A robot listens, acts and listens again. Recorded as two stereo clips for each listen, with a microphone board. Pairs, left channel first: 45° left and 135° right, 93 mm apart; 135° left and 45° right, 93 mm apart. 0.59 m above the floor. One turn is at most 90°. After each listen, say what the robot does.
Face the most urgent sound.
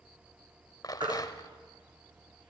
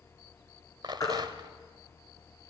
Turn 90° right.
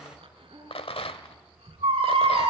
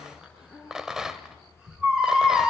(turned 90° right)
Turn 90° right.
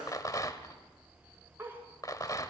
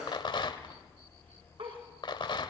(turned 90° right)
Turn 35° right.
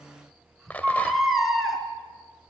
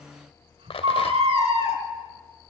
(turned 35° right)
Turn 45° right.
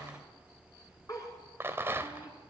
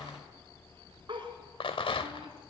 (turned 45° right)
Facing the baby crying, 2 to 4 m away.